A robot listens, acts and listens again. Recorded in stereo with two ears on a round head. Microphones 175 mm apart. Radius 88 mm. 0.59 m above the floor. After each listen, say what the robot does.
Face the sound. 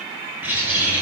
Turn 30° right.
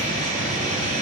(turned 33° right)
Turn 140° right.
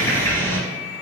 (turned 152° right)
Turn 10° left.
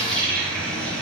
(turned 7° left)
Facing the bird, 2 to 4 m away.